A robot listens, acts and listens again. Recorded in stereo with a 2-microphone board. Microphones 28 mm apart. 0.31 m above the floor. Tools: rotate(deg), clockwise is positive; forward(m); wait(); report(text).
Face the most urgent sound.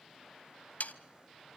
wait()
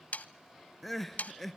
rotate(-30)
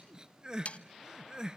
rotate(25)
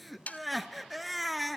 report("Facing the crying.")